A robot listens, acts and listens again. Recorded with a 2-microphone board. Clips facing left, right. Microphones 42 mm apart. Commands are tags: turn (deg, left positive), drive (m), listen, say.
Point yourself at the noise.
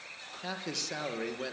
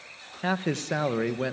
<turn deg="-30"/>
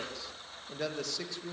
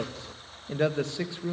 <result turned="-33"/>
<turn deg="-25"/>
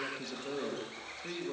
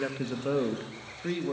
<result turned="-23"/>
<turn deg="-35"/>
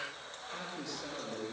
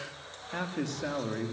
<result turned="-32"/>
<turn deg="-125"/>
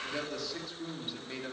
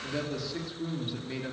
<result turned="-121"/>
<say>Facing the man speaking.</say>